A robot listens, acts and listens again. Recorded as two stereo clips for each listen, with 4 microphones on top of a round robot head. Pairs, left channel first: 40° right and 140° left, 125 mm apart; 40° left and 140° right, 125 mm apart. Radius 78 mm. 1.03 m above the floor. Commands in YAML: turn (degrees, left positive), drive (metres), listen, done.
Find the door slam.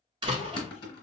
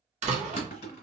turn: -170
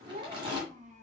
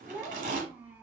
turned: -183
turn: 15
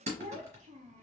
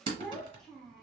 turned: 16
done: "Facing where the door slam came from. I can't hear it now."